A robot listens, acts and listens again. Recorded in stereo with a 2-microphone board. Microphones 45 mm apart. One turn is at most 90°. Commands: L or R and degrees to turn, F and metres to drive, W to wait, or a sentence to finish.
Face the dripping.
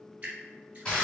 R30
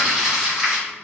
W
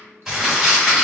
W
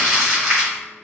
I heard dripping, but can't make it out now. It was about straight ahead or 120° right.